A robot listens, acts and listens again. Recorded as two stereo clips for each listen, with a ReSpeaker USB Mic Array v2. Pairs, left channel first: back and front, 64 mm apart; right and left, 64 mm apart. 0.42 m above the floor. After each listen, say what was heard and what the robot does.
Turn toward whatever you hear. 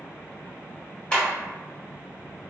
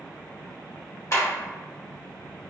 The clap: 110° right. Turn 110° right.
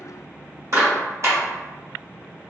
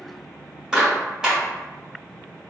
The clap is now 10° left. Turn 10° left.
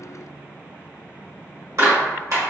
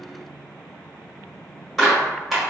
Facing the clap.